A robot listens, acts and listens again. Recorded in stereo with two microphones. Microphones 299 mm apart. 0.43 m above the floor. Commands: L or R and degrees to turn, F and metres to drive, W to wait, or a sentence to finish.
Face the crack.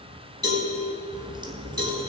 R15
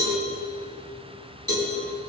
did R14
W
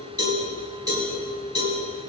I heard a crack, but can't make it out now. It was about straight ahead or 150° right.